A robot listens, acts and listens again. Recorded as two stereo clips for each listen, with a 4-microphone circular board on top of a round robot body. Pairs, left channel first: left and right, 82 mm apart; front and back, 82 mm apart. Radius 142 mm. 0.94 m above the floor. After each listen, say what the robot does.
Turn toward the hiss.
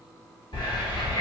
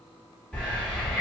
Turn 80° left.
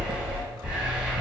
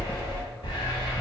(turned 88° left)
Turn 10° right.
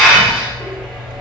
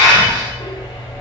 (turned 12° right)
Facing the hiss.